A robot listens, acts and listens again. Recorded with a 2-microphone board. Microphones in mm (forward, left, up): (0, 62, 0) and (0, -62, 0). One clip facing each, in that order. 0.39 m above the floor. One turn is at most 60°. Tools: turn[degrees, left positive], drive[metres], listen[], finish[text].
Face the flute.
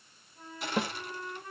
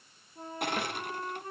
Thought: The flute: about 35° right or 145° right.
Action: turn[-35]
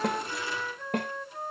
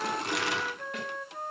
Action: finish[Found it: a flute, straight ahead, 1 to 2 m away.]